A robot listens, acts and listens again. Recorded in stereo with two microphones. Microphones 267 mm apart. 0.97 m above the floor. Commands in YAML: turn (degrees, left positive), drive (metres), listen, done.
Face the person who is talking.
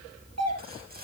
listen: true
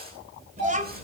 turn: -25
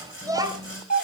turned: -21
turn: -30
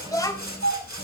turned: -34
turn: 10
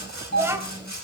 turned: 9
turn: -10
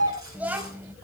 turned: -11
done: "Found it: a child speaking, straight ahead, 2 to 4 m away."